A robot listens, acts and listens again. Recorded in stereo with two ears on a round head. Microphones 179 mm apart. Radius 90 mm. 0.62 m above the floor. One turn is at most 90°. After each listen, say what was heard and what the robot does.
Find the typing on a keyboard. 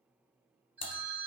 The typing on a keyboard: about 30° left or 150° left. Turn 30° left.
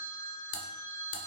So it is at 115° left. Turn 90° left.
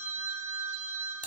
Nothing new. It was at 25° left. Turn 25° left.
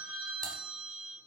Keep listening.
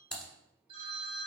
Facing the typing on a keyboard, 1 to 2 m away.